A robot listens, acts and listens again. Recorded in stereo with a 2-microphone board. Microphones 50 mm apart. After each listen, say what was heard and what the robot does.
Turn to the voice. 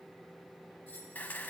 Keep listening.
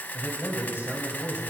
The man speaking: about 45° right or 135° right. Turn 45° right.
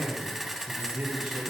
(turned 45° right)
So it is at 30° right. Turn 30° right.
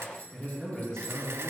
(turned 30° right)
The man speaking is now 15° left. Turn 15° left.
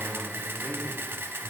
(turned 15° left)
Keep listening.
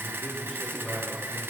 Found it: a man speaking, straight ahead, over 4 m away.